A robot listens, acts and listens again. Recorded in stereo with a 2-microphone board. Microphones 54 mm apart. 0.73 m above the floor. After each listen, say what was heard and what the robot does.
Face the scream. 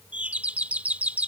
Keep listening.
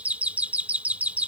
Keep listening.
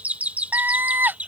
The scream: about 40° right or 140° right. Turn 40° right.
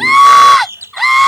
Found it: a scream, straight ahead.